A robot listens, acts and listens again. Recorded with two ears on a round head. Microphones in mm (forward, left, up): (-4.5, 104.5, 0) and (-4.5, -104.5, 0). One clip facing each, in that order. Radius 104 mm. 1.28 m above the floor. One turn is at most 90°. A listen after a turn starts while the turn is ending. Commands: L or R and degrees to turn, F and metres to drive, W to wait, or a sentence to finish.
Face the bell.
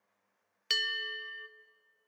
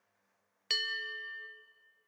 L20
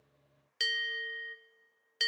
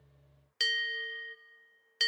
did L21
Found it: a bell, straight ahead, under 1 m away.